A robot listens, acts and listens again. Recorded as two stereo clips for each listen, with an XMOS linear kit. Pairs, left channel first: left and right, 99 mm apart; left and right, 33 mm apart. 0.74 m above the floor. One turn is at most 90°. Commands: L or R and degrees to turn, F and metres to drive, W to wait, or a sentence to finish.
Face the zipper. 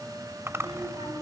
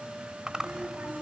R25
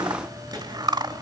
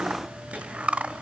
R90
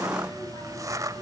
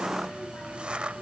R40
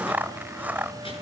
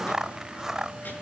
R20
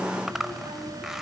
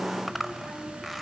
Facing the zipper.